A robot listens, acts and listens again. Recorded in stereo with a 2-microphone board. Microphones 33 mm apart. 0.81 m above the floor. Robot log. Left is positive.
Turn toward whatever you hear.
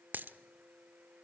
note: The dropped coin: about 75° right or 105° right.
cmd yaw -75
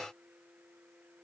cmd idle
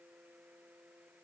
end: I heard a dropped coin, but can't make it out now. It was about straight ahead or 30° right.